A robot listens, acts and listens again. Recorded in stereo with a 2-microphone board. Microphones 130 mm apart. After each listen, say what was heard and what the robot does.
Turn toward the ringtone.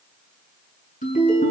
The ringtone: about 65° left or 115° left. Turn 65° left.
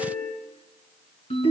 So it is at 55° left. Turn 55° left.
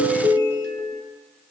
The ringtone is now 20° left. Turn 20° left.
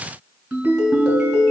Facing the ringtone.